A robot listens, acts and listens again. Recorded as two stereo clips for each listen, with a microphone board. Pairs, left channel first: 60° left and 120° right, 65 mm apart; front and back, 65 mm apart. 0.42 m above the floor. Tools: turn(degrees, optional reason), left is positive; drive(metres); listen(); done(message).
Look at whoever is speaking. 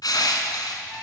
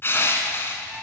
listen()
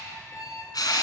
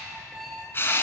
listen()
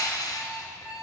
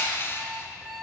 done("I can't make out anyone speaking to turn to.")